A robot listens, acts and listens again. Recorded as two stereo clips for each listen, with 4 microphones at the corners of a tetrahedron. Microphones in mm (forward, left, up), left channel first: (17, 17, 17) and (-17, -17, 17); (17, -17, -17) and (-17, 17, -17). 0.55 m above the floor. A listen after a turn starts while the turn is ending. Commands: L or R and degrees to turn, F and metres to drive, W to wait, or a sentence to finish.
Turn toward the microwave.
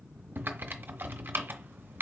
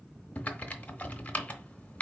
W
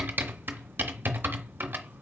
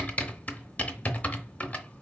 W
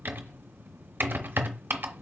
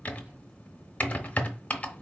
I can't make out a microwave, only typing on a keyboard.